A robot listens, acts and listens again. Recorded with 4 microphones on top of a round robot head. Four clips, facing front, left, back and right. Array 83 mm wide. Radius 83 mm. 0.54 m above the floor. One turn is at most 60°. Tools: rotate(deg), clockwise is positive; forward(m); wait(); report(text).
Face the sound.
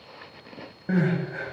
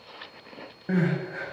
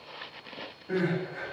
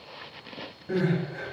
rotate(-45)
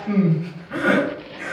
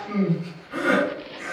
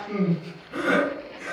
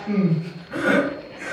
rotate(15)
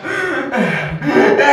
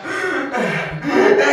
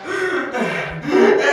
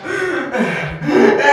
report("Facing the crying, under 1 m away.")